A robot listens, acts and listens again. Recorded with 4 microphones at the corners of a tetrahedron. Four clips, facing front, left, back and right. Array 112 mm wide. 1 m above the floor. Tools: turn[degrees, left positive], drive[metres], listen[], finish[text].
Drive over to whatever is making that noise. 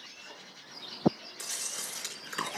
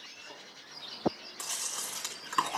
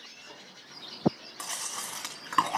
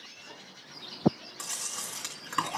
Thought: The chewing: straight behind.
Action: turn[180]
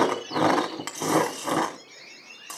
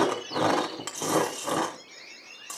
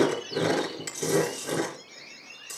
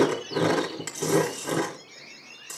Thought: The chewing is now 25° left.
Action: turn[25]
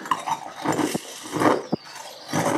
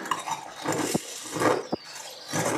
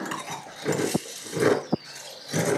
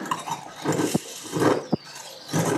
Action: drive[1.0]
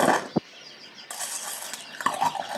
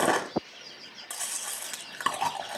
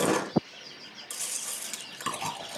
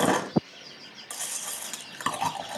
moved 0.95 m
Action: drive[1.0]
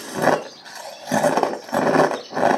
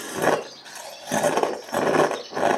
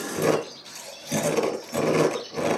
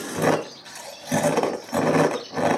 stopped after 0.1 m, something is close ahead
Thought: The chewing is now 15° left.
Action: turn[15]
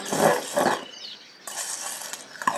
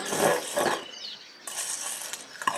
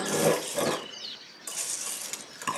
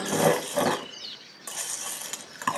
Action: finish[Arrived at the chewing, straight ahead.]